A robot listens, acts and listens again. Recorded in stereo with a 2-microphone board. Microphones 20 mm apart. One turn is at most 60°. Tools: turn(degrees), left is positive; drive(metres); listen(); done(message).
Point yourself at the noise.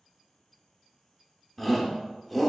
turn(degrees=30)
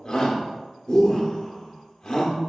turn(degrees=60)
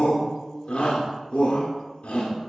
turn(degrees=60)
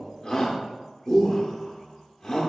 turn(degrees=35)
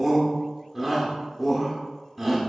done("Facing the shout, under 1 m away.")